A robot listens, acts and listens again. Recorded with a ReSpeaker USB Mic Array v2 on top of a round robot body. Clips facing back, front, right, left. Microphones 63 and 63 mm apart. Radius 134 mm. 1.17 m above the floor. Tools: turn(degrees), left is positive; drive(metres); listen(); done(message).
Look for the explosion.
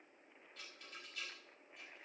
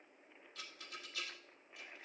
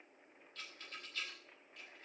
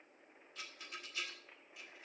listen()
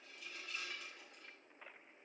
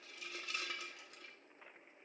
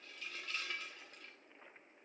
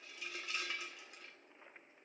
listen()
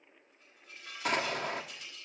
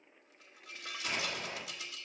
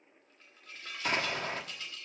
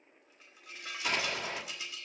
turn(degrees=-150)
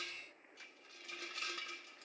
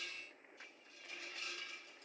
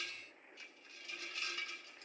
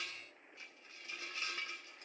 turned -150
done("I heard an explosion from this way, but can't make it out now.")